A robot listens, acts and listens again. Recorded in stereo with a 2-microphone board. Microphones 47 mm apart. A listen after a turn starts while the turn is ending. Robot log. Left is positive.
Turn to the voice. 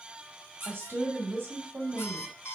note: The woman speaking: about 60° right or 120° right.
cmd yaw -60
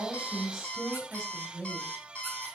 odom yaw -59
note: So it is at 15° right.
cmd yaw -15
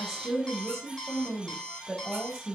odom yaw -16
end: Found it: a woman speaking, straight ahead.